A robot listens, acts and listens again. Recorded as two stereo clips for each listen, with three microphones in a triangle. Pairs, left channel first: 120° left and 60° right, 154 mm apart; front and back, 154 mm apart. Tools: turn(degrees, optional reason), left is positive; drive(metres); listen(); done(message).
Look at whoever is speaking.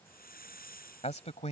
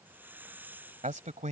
turn(degrees=155, reason="The man speaking: 155° left.")
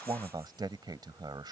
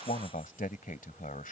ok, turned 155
done("Found it: a man speaking, straight ahead.")